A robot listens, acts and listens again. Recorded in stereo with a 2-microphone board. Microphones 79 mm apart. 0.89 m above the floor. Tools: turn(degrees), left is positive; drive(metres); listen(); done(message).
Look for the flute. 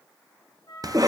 turn(degrees=65)
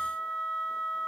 done("Found it: a flute, straight ahead.")